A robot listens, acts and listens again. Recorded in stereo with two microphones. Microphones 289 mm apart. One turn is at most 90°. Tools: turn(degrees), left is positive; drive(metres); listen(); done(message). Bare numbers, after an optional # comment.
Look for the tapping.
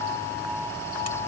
listen()
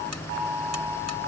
listen()
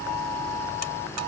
done("I can't make out tapping.")